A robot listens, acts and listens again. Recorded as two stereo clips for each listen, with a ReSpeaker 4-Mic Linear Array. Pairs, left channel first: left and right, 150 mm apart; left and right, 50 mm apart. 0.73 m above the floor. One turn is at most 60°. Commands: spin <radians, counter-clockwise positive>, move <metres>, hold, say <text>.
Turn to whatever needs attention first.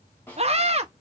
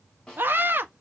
spin -0.79
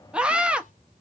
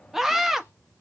spin -0.17
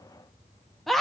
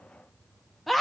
say Facing the scream.